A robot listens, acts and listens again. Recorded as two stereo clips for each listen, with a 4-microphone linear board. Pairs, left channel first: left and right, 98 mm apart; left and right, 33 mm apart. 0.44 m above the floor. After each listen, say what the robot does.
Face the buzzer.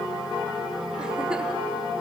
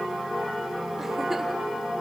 Keep listening.
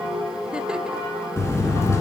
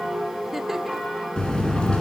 Turn 30° left.
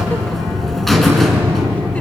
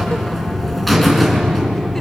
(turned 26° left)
Facing the buzzer, 2 to 4 m away.